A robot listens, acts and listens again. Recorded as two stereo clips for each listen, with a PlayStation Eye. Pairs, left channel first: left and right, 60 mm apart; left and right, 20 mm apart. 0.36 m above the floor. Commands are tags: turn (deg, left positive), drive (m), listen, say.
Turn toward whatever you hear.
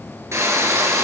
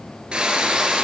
<turn deg="-55"/>
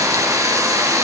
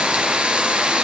<turn deg="-70"/>
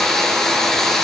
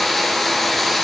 <say>Facing the frying.</say>